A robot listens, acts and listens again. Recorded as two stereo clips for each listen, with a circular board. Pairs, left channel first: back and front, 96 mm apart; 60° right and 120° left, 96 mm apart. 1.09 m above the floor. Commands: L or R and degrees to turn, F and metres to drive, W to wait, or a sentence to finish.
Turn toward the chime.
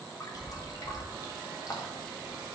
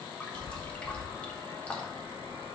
R65
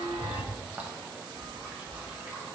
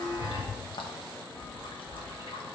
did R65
Facing the chime.